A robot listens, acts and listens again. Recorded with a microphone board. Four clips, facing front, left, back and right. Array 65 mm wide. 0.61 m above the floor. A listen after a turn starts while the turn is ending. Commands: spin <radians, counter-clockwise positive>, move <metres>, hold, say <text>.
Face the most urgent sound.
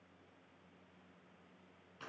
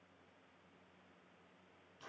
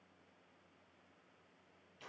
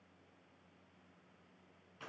hold
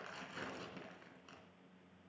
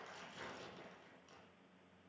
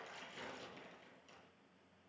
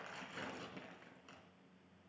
hold
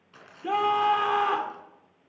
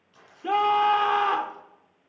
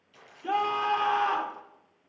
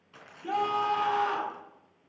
spin 1.22
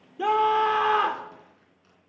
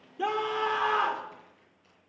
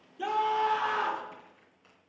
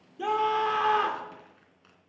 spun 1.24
say Found it: a scream, straight ahead.